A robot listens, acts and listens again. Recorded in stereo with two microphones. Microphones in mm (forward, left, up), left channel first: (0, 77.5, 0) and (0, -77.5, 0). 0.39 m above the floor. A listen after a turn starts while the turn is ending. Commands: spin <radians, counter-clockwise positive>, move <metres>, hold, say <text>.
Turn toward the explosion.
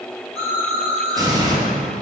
spin -0.44
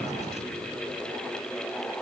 hold
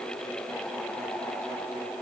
say I heard an explosion, but can't make it out now. It was about straight ahead or 130° right.